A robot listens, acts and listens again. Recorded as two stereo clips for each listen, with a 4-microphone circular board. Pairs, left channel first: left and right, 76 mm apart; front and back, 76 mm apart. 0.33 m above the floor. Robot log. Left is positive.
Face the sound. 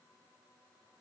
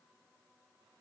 cmd idle
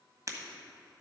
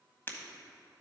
note: The breaking glass: 55° right.
cmd yaw -55
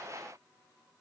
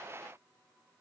end: Facing where the breaking glass came from. I can't hear it now.